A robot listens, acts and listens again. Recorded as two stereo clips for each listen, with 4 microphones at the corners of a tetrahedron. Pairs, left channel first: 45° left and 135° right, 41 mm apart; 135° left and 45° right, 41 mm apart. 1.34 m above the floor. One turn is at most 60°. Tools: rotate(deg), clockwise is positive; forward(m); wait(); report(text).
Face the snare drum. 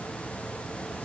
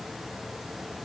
wait()
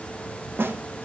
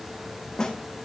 rotate(60)
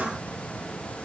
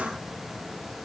rotate(60)
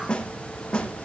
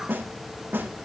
rotate(20)
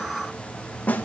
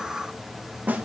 report("Found it: a snare drum, straight ahead.")